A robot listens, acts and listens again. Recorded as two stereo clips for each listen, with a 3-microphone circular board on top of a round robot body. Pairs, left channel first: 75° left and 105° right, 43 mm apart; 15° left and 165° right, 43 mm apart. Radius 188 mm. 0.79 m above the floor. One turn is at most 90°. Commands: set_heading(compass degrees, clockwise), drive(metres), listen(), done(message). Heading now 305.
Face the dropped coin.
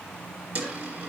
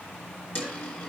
set_heading(350)
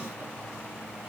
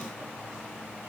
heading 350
done("Facing where the dropped coin came from. I can't hear it now.")